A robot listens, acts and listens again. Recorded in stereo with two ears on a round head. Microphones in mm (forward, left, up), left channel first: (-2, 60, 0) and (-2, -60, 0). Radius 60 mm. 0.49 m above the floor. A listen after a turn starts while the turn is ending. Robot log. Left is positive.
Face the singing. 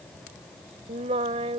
note: The singing: about 45° right or 135° right.
cmd yaw -45
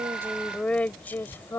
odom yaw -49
note: So it is at 20° left.
cmd yaw +20
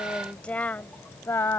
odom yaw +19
note: The singing is now 20° left.
cmd yaw +20
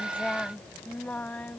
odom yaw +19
note: The singing is now 10° left.
cmd yaw +10
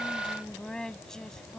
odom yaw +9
end: Facing the singing.